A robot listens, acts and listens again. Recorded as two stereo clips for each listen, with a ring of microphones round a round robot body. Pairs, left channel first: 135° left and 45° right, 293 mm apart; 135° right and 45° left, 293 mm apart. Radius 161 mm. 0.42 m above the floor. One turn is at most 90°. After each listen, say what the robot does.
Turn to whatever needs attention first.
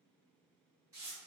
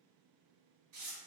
Keep listening.
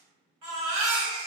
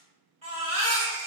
Turn 25° right.
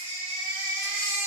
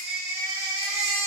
Facing the baby crying.